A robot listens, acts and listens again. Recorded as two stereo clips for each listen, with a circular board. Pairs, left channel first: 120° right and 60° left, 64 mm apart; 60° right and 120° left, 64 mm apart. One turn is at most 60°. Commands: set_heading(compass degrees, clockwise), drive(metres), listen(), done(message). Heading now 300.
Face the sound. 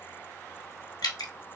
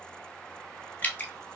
set_heading(0)
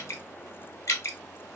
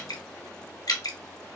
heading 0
set_heading(60)
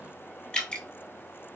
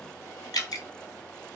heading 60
set_heading(105)
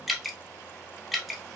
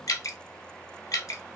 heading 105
set_heading(135)
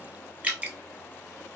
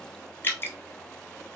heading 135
done("Found it: dripping, straight ahead, under 1 m away.")